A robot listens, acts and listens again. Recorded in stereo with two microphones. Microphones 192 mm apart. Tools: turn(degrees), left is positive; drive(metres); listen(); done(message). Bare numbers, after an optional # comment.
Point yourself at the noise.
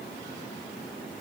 listen()
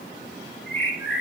# The bird: about 70° left or 110° left.
turn(70)
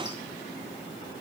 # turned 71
listen()
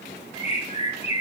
# So it is at 35° left.
turn(35)
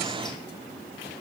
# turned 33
listen()
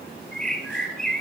done("Found it: a bird, straight ahead, under 1 m away.")